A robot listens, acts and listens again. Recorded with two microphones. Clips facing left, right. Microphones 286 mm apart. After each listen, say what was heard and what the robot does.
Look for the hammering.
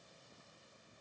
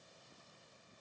Keep listening.
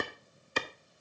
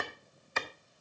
Keep listening.
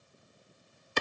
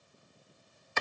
I can't make out hammering to turn to.